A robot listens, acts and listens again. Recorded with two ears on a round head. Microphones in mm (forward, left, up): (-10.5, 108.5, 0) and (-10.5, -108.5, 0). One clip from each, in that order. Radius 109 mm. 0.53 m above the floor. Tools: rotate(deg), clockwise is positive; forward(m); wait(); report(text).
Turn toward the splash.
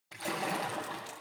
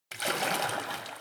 rotate(55)
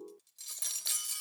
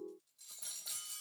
wait()
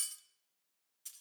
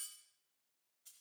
report("I heard a splash, but can't make it out now. It was about straight ahead or 70° right.")